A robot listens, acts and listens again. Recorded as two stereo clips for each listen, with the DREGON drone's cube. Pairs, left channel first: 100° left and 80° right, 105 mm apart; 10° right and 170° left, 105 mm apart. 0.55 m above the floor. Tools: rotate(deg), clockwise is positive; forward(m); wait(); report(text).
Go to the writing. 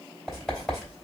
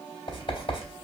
rotate(-10)
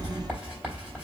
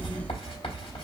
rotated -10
forward(1.0)
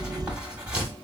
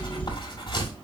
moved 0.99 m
forward(1.0)
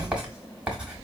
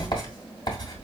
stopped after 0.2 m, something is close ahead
report("Arrived at the writing, straight ahead.")